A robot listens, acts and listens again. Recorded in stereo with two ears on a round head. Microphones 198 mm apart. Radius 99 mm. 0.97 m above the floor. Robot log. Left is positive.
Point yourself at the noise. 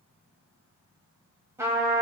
cmd yaw -30
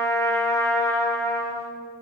note: So it is at 15° left.
cmd yaw +15
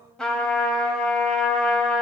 end: Found it: a trumpet, straight ahead.